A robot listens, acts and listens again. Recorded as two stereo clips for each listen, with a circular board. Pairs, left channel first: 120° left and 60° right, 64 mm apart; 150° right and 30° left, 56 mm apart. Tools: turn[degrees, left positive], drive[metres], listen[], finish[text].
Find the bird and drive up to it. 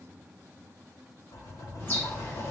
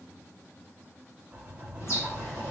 Thought: The bird: 175° left.
Action: turn[175]
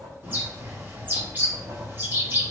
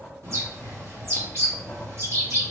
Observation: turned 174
Action: drive[1.0]
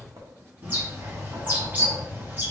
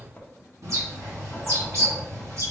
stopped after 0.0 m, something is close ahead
Action: finish[Something is in my way. I am facing the bird but have not reached it.]